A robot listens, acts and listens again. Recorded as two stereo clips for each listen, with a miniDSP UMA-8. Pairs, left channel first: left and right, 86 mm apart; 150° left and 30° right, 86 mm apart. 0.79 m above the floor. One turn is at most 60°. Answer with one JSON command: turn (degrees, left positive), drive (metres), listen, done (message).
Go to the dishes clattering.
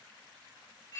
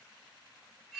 {"listen": true}
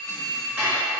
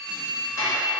{"turn": -60}
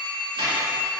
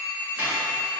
{"turn": -60}
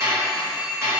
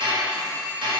{"turn": -35}
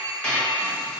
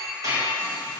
{"turn": 10}
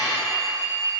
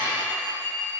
{"drive": 1.0}
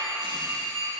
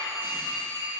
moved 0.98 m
{"listen": true}
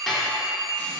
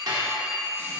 {"drive": 1.0}
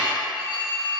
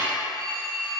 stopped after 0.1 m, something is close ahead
{"done": "I am next to the dishes clattering."}